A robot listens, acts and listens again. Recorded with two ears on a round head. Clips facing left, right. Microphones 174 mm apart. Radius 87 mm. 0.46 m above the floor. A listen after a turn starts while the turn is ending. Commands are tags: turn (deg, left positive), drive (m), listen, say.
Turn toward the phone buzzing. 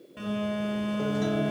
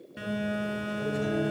<turn deg="-15"/>
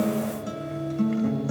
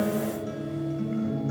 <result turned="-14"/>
<listen/>
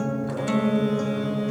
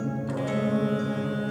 <say>Found it: a phone buzzing, straight ahead, 2 to 4 m away.</say>